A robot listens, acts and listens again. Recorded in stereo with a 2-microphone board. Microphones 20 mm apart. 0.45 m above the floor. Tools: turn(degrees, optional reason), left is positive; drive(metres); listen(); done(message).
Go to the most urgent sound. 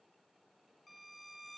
listen()
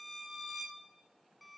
listen()
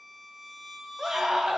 turn(degrees=-25, reason="The scream: about 25° right or 155° right.")
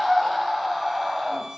drive(metres=1.0)
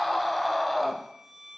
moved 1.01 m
drive(metres=1.0)
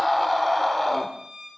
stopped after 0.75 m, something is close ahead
turn(degrees=10, reason="The scream is now 10° left.")
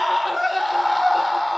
done("I am next to the scream.")